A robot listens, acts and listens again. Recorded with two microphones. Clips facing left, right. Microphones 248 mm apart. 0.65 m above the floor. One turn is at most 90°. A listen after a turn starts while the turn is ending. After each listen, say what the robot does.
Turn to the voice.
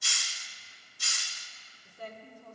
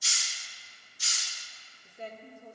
Turn 25° right.
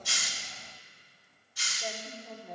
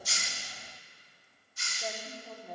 Facing the woman speaking, 1 to 2 m away.